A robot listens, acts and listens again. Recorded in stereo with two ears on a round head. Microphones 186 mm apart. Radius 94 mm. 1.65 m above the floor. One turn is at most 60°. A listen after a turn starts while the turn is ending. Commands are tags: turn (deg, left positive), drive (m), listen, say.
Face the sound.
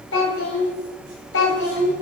<turn deg="60"/>
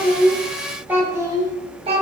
<turn deg="-30"/>
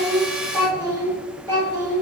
<turn deg="-20"/>
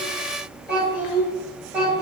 <turn deg="-10"/>
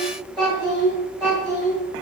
<say>Found it: a child speaking, straight ahead, 1 to 2 m away.</say>